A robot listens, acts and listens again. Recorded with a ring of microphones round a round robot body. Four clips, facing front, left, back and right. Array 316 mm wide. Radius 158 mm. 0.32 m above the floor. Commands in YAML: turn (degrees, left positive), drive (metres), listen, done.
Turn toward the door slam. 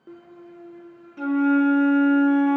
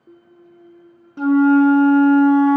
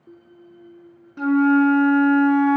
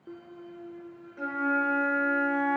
listen: true
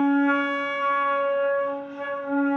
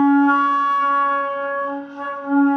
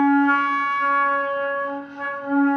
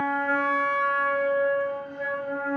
listen: true
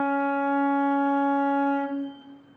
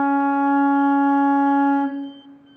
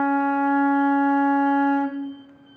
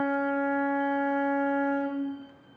done: "I can't make out a door slam, only a flute."